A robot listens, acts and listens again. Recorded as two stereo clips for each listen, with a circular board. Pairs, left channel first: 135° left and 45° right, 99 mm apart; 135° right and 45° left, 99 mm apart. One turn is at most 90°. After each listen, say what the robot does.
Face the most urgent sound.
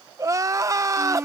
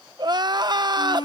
Turn 10° left.
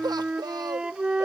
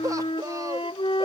Facing the crying.